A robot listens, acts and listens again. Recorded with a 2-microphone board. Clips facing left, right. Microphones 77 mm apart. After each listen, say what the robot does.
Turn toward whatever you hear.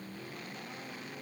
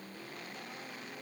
Keep listening.
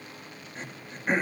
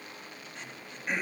Turn 35° left.
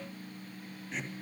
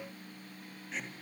Facing the throat clearing.